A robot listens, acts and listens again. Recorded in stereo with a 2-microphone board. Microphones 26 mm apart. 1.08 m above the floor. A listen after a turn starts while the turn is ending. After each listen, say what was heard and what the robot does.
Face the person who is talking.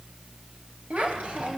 The child speaking: about 40° right or 140° right. Turn 40° right.
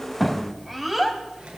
Found it: a child speaking, straight ahead.